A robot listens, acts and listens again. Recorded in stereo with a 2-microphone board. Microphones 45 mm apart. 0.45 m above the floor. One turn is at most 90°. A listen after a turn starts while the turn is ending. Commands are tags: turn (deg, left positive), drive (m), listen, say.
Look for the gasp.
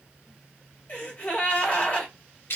<turn deg="35"/>
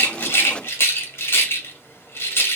<listen/>
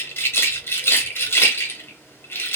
<say>I heard a gasp, but can't make it out now. It was about straight ahead or 110° left.</say>